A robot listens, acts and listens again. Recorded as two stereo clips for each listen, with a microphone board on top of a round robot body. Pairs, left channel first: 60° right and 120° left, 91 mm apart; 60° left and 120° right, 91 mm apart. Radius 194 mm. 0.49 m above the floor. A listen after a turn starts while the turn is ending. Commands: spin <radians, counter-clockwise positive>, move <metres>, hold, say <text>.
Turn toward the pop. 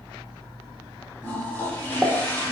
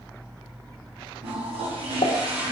spin 0.70
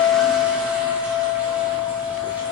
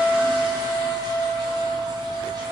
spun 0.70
say I heard a pop from this way, but can't make it out now.